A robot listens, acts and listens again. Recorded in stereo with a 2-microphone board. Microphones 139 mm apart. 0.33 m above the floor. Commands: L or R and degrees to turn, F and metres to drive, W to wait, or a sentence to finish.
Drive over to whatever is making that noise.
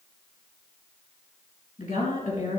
L90
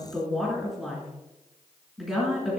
F1.0
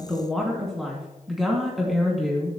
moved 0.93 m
F1.0
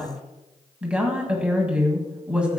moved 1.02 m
R10
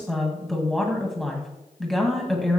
F1.0
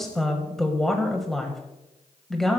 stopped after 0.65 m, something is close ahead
I am next to the woman speaking.